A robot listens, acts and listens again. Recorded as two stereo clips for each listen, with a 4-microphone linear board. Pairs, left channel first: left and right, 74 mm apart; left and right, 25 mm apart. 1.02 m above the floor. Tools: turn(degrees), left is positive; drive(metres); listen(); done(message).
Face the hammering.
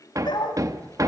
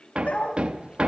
turn(degrees=-50)
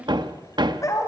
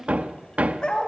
turn(degrees=-80)
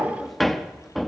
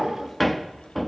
done("Found it: hammering, straight ahead.")